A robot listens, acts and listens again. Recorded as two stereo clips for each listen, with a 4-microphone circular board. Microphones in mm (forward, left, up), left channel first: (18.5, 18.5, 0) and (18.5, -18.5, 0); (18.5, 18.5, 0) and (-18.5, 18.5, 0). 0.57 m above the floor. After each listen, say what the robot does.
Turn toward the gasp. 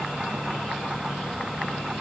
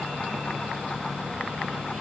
Keep listening.
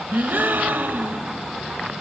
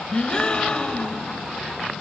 Turn 65° right.
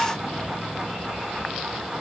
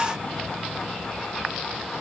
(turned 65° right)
I heard a gasp from this way, but can't make it out now.